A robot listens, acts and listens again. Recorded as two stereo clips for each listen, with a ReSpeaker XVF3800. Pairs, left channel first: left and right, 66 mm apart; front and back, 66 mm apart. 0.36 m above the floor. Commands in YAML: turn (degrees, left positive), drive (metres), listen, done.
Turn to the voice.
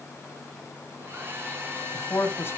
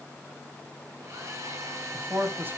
turn: 130
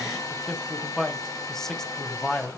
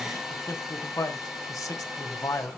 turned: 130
turn: 10
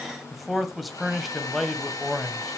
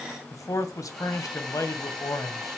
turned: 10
done: "Found it: a man speaking, straight ahead, 1 to 2 m away."